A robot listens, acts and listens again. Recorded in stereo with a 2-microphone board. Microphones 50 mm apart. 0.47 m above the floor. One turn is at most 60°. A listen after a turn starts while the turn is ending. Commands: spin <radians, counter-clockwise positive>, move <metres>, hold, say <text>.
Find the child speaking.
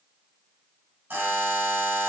hold
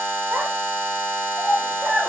spin -0.61
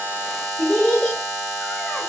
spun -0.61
spin 0.17
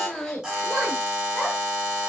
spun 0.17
spin 0.35
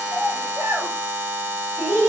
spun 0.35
say Facing the child speaking, 2 to 4 m away.